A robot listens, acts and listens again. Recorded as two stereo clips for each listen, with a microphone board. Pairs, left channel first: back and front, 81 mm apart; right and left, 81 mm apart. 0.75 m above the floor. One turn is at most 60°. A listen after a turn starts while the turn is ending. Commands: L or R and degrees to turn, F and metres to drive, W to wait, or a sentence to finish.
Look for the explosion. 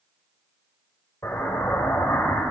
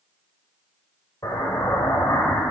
R60
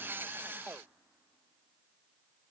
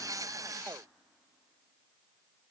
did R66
R60
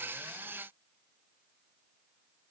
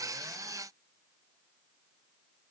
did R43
R20
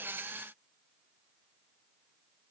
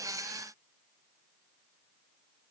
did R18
Facing where the explosion came from. I can't hear it now.